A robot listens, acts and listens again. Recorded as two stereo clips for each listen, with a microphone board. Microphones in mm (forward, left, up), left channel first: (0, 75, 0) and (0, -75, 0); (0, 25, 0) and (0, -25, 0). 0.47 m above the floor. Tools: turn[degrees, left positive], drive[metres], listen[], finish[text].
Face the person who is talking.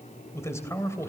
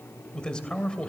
Thought: The man speaking: about 20° left or 160° left.
Action: turn[20]
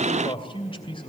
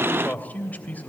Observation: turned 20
Thought: So it is at 140° left.
Action: turn[140]
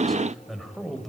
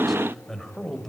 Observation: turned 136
Action: finish[Facing the man speaking.]